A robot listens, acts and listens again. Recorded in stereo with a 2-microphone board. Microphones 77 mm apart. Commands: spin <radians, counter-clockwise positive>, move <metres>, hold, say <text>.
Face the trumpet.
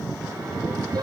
hold
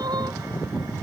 hold
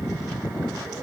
say I can't make out a trumpet to turn to.